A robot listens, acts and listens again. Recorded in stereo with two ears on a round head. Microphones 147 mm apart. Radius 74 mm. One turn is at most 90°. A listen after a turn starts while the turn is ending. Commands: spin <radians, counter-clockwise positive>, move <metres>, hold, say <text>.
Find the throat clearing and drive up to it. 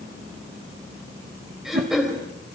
spin 0.52
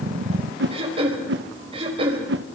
spin -0.61
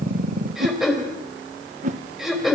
move 1.0
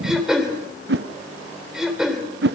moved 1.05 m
move 1.0
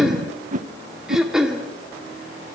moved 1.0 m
move 1.0
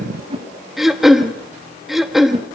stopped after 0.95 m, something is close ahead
say I am next to the throat clearing.